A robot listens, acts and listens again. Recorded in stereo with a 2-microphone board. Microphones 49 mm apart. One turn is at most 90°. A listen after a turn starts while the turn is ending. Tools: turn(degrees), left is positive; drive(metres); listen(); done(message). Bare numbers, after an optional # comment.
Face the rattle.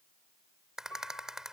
turn(-30)
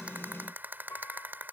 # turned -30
# So it is at 140° right.
turn(-90)
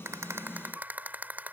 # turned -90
# The rattle is now 35° right.
turn(-35)
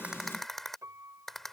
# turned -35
done("Facing the rattle.")